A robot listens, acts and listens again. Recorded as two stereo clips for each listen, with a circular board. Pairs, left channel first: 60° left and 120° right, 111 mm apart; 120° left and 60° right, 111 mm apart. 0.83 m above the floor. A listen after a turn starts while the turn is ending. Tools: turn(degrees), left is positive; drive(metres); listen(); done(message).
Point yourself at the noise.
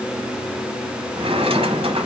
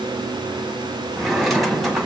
turn(degrees=-150)
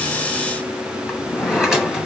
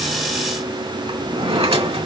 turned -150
turn(degrees=-35)
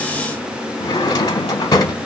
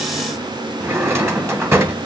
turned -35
done("Facing the drawer, 1 to 2 m away.")